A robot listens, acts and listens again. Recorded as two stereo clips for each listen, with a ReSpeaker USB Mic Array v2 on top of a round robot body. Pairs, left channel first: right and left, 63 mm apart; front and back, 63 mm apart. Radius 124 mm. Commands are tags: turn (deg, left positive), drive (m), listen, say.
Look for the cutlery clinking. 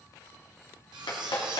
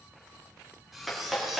<turn deg="90"/>
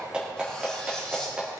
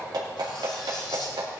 <listen/>
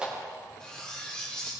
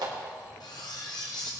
<turn deg="-15"/>
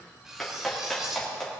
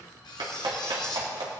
<say>Found it: cutlery clinking, straight ahead.</say>